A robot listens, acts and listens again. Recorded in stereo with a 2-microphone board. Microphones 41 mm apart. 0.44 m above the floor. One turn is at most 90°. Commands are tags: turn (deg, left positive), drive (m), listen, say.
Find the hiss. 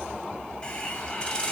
<turn deg="20"/>
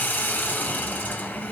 <turn deg="90"/>
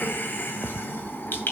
<turn deg="55"/>
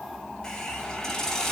<turn deg="15"/>
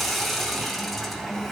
<say>Facing the hiss.</say>